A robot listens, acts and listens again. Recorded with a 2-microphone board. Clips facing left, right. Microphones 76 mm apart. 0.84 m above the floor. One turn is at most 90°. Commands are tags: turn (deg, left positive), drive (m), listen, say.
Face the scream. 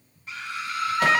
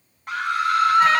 <turn deg="-60"/>
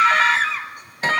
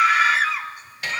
<say>Facing the scream.</say>